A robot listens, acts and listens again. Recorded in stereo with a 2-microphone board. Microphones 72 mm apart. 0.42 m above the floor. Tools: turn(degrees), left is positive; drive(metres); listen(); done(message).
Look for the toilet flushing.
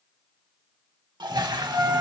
turn(degrees=-90)
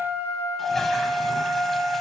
listen()
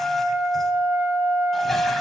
listen()
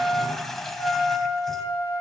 done("Facing the toilet flushing.")